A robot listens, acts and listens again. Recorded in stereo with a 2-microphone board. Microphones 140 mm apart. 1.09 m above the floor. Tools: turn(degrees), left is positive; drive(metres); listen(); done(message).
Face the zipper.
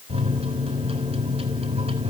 listen()
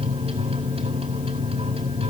listen()
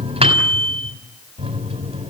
done("I can't make out a zipper, only a microwave.")